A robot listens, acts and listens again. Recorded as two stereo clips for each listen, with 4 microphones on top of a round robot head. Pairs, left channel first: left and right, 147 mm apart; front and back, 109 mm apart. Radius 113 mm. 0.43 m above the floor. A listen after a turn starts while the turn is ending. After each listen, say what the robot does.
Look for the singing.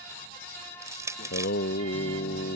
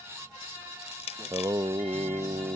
Turn 135° left.
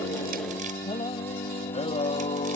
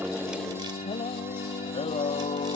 Turn 40° left.
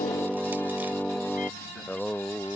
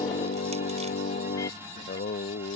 Facing the singing.